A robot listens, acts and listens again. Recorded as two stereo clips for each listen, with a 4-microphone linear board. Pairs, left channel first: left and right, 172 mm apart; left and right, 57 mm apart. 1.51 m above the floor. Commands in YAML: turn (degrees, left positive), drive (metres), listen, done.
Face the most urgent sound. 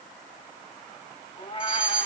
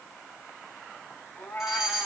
turn: -30
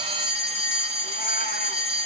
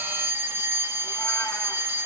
turn: -140
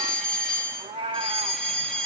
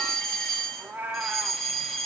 done: "Found it: a fire alarm, straight ahead, 2 to 4 m away."